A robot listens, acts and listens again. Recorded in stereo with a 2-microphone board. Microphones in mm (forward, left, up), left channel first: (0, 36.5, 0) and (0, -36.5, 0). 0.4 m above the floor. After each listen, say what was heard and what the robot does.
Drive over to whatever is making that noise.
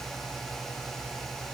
Keep listening.
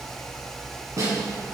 The snare drum: about 45° right or 135° right. Turn 45° right.
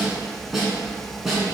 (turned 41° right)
Drive 1.0 m forward.
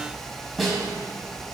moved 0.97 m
Drive 1.0 m forward.
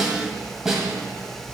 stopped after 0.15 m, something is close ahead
I am next to the snare drum.